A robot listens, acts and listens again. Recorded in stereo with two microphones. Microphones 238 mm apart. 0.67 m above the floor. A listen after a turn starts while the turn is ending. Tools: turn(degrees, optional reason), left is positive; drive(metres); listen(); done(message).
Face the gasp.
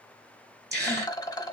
turn(degrees=-40, reason="The gasp: about 40° right or 140° right.")
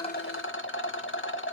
listen()
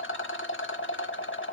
done("I heard a gasp, but can't make it out now. It was about straight ahead or 100° right.")